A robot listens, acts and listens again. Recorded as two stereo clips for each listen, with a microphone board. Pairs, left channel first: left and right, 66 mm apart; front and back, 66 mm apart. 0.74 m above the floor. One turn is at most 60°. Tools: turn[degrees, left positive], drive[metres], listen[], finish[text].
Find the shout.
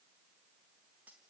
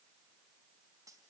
Action: listen[]
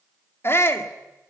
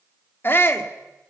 Thought: The shout: 45° left.
Action: turn[45]
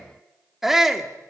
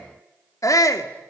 Action: finish[Facing the shout.]